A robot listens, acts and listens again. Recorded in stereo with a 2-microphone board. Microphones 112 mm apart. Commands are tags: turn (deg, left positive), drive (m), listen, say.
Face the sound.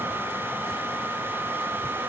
<listen/>
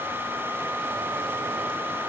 <listen/>
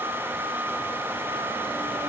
<say>I can't make out anything to turn to.</say>